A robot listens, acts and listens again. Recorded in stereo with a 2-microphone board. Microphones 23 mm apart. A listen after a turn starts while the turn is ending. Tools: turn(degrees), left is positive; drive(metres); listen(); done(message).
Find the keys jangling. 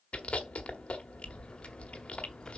turn(degrees=45)
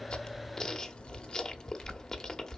turn(degrees=45)
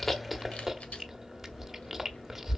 listen()
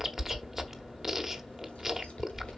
listen()
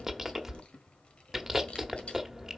turn(degrees=130)
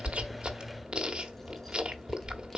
listen()
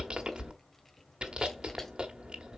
turn(degrees=10)
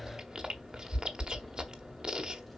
listen()
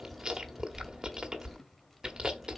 done("Found it: keys jangling, straight ahead, 1 to 2 m away.")